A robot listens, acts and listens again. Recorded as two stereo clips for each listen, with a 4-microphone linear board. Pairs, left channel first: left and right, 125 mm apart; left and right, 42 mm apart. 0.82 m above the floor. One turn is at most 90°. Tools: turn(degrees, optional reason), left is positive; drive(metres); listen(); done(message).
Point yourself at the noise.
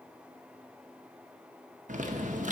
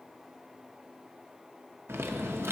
turn(degrees=-90)
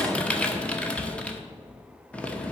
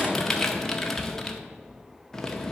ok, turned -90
turn(degrees=10, reason="So it is at 10° left.")
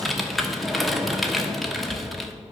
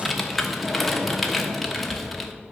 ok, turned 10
done("Found it: typing on a keyboard, straight ahead, under 1 m away.")